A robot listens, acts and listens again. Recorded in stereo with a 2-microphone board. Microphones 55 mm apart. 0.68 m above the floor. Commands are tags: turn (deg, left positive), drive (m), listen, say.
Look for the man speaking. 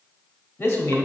<turn deg="55"/>
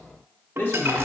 <turn deg="45"/>
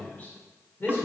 <turn deg="40"/>
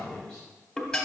<listen/>
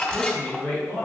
<turn deg="25"/>
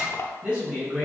<turn deg="-20"/>
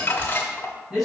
<say>Facing the man speaking, 2 to 4 m away.</say>